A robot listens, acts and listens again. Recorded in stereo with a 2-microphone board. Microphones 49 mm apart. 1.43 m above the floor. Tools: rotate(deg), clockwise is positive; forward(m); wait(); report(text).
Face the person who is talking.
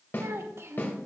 rotate(60)
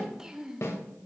rotate(10)
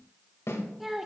report("Facing the child speaking, under 1 m away.")